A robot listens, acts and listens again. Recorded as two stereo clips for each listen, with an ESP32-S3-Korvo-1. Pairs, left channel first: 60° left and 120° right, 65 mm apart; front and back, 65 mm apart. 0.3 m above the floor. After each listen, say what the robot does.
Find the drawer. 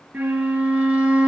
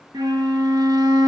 Keep listening.
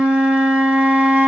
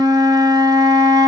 Keep listening.
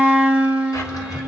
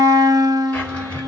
Turn 65° left.
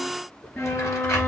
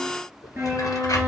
Turn 20° left.
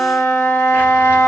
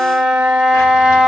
Keep listening.
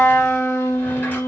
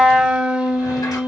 Keep listening.
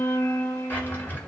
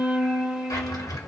Facing the drawer.